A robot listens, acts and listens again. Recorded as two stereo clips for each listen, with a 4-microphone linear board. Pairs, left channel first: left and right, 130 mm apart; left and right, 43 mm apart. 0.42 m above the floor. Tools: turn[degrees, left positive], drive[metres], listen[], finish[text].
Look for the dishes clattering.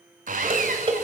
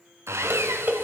Thought: The dishes clattering: about 40° right or 140° right.
Action: turn[-40]
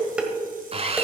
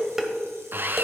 Thought: So it is at 10° right.
Action: turn[-10]
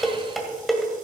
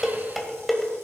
Action: finish[Found it: dishes clattering, straight ahead.]